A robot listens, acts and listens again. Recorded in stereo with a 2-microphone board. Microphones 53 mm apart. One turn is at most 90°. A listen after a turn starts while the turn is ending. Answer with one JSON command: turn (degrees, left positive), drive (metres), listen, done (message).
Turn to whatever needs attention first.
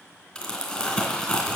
{"listen": true}
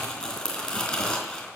{"listen": true}
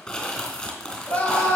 {"turn": 35}
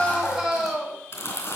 {"done": "Facing the scream, over 4 m away."}